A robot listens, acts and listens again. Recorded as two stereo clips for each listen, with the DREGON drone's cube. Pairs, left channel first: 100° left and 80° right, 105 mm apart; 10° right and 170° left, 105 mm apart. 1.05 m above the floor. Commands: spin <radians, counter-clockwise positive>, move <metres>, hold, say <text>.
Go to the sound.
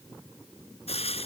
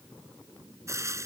spin 1.92
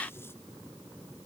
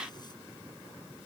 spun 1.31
spin 0.61
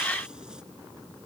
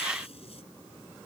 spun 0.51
hold
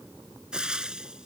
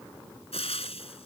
move 1.0
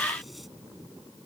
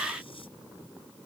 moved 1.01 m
hold
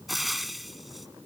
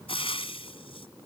spin 0.17
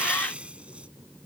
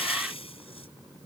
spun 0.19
move 1.0
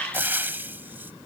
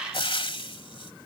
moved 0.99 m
spin -0.17
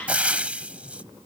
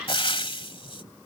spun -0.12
move 1.0
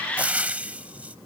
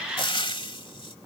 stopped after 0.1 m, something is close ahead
say Arrived at the frying, straight ahead.